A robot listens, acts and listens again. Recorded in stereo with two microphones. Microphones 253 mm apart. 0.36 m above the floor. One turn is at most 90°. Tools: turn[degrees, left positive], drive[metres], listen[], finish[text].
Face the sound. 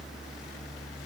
Action: listen[]
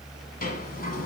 Thought: The sliding door: about 35° left or 145° left.
Action: turn[35]
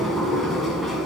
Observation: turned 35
Action: finish[Found it: a sliding door, straight ahead.]